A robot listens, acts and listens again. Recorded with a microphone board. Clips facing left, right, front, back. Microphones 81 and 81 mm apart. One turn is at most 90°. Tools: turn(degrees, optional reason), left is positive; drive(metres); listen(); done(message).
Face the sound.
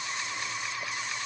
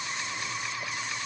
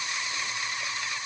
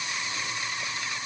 listen()
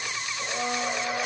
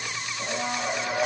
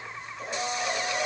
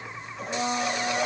turn(degrees=-90, reason="The blender: 150° right.")
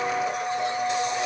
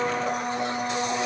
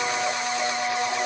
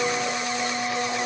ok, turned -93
turn(degrees=-60, reason="The blender is now 60° right.")
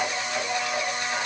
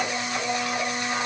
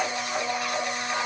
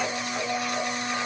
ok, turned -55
done("Facing the blender, 2 to 4 m away.")